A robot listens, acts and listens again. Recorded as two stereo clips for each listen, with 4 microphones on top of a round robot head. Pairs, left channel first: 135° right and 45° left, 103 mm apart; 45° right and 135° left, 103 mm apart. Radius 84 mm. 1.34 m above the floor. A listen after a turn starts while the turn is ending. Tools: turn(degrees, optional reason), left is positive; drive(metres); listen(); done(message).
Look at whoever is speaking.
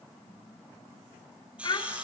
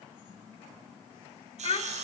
turn(degrees=-80, reason="The child speaking: 80° right.")
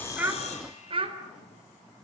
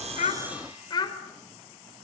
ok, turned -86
done("Facing the child speaking, over 4 m away.")